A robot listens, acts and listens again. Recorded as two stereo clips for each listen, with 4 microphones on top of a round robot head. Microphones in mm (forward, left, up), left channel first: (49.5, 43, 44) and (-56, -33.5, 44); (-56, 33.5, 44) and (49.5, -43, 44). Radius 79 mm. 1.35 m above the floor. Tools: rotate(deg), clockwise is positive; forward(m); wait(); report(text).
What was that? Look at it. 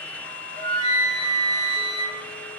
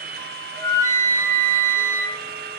rotate(-75)
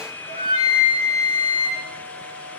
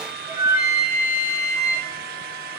rotate(-35)
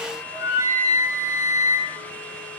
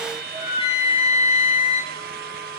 rotate(-10)
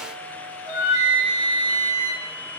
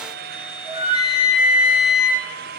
report("Found it: a flute, straight ahead, over 4 m away.")